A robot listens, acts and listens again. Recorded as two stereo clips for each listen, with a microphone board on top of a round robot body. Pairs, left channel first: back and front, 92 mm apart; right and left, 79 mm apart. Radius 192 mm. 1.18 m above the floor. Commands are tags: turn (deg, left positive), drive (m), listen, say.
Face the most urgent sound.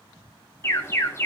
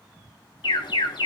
<turn deg="-115"/>
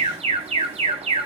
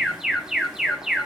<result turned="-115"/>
<say>Facing the alarm, 2 to 4 m away.</say>